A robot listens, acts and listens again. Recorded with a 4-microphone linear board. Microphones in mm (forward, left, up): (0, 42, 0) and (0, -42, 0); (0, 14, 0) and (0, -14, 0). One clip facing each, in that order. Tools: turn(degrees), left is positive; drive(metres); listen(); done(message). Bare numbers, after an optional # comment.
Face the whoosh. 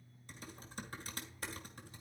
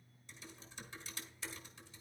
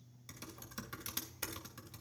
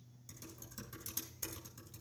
listen()
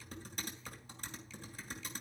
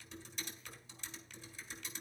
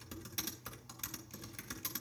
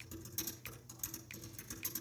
listen()
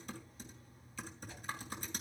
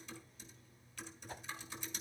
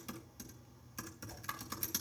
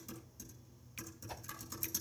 # The whoosh: about 45° right or 135° right.
turn(-45)
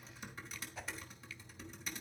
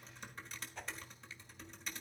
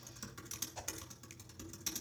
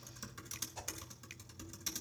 done("Found it: a whoosh, straight ahead, 1 to 2 m away.")